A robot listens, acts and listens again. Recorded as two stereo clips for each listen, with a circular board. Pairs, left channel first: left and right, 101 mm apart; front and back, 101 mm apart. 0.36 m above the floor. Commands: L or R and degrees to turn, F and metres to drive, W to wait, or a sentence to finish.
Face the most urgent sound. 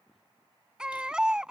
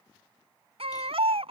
R170
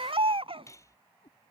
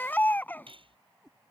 R70
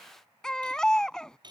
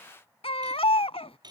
Found it: a baby crying, straight ahead.